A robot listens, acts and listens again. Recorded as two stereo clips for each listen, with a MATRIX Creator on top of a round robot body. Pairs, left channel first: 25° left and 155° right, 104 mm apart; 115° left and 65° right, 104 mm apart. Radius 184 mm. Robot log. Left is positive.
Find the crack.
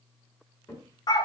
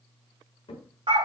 note: The crack: 75° left.
cmd yaw +75
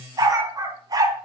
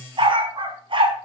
end: I heard a crack from this way, but can't make it out now.